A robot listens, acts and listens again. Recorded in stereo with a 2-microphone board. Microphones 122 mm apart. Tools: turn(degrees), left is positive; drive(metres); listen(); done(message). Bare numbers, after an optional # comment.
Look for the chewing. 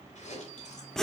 turn(90)
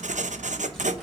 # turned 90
listen()
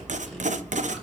listen()
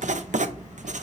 done("Facing where the chewing came from. I can't hear it now.")